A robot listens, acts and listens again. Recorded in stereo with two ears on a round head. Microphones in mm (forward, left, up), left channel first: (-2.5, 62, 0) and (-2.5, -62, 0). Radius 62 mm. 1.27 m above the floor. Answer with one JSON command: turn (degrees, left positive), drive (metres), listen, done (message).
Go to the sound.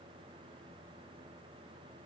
{"listen": true}
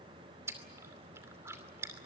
{"turn": -20}
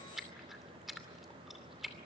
{"drive": 1.0}
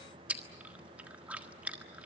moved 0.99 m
{"turn": -10}
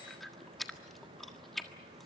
{"drive": 1.0}
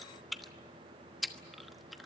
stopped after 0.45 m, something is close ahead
{"done": "Arrived at the chewing, straight ahead."}